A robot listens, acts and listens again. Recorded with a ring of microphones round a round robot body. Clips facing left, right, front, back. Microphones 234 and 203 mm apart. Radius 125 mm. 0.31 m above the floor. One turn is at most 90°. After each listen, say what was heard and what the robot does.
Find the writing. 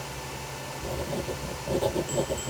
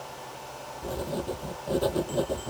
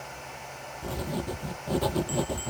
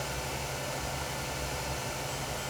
Facing the writing.